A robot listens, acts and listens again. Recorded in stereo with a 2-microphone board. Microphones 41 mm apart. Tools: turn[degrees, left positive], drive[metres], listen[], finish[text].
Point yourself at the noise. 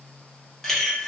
Action: turn[30]
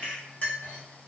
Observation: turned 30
Thought: So it is at 140° left.
Action: turn[140]
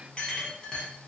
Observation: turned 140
Thought: The clink is now 25° left.
Action: turn[25]
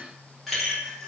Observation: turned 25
Action: finish[Found it: a clink, straight ahead, under 1 m away.]